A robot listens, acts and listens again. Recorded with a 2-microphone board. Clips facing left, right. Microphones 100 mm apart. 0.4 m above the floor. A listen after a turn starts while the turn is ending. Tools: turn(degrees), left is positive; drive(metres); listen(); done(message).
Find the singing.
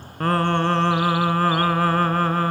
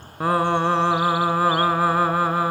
turn(degrees=-30)
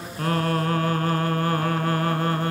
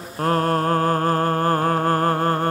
turn(degrees=-140)
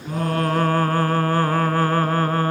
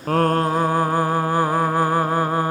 turn(degrees=-15)
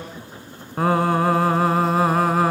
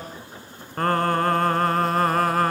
done("Facing the singing.")